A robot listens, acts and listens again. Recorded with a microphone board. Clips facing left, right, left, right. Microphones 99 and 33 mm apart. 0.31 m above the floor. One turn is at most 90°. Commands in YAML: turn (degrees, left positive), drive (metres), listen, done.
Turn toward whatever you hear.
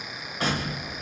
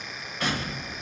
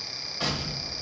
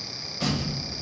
turn: 35
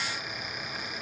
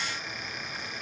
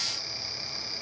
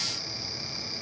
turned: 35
listen: true
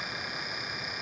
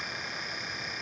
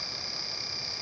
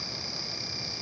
done: "I heard an explosion, but can't make it out now. It was about straight ahead or 110° left."